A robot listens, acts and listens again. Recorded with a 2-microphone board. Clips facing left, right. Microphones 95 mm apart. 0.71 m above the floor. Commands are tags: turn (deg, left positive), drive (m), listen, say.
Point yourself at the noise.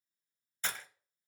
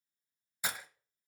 <turn deg="-30"/>
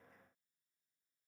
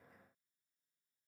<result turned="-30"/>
<listen/>
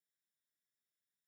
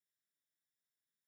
<say>I heard breaking glass, but can't make it out now. It was about 20° left or 140° right.</say>